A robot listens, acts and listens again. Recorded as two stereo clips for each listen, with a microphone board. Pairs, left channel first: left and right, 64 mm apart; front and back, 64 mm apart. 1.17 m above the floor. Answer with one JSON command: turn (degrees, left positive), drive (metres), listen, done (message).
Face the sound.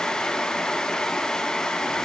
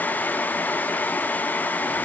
{"listen": true}
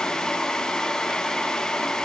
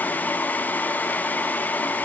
{"listen": true}
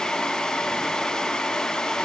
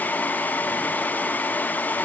{"done": "I can't make out anything to turn to."}